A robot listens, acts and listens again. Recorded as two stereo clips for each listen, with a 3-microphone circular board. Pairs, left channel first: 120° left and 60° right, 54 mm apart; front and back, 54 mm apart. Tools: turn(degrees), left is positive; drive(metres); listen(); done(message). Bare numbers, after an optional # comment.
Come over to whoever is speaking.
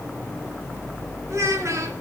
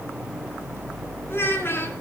# The child speaking: 40° right.
turn(-40)
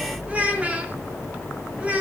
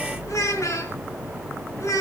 drive(1.0)
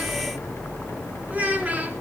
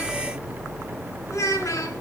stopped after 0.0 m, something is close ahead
done("Blocked. The child speaking is further on, straight ahead.")